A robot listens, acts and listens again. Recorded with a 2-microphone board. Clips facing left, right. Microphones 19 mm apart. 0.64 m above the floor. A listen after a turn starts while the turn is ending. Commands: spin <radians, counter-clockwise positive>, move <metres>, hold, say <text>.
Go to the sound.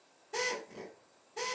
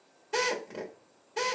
spin -1.13
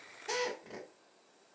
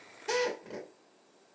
spin -0.35
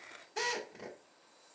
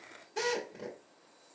move 1.0
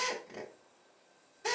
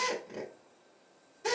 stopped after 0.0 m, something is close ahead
spin -0.17
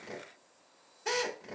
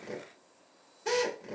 say Something is in my way. I am facing the drill but have not reached it.